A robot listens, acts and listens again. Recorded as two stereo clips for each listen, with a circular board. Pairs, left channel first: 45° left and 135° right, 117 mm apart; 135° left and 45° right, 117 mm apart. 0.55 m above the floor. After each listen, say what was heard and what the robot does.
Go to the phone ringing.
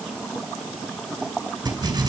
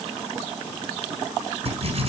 Keep listening.
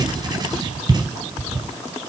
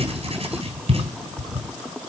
Keep listening.
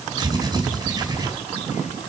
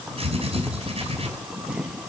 I can't make out a phone ringing to turn to.